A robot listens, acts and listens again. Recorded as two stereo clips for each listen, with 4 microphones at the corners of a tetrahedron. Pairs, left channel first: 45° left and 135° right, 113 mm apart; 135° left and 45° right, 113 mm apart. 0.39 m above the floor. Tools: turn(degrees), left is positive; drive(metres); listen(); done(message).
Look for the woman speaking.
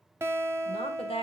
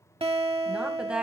turn(degrees=35)
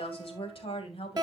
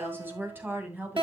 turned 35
turn(degrees=30)
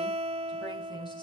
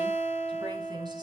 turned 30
listen()
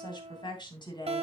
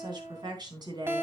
done("Facing the woman speaking, 2 to 4 m away.")